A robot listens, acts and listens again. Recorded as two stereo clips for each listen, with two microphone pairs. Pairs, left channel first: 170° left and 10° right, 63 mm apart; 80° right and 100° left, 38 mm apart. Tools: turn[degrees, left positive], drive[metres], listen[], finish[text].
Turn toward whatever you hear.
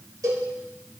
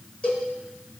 Thought: The cowbell: 25° right.
Action: turn[-25]
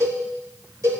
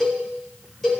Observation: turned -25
Action: finish[Found it: a cowbell, straight ahead, 2 to 4 m away.]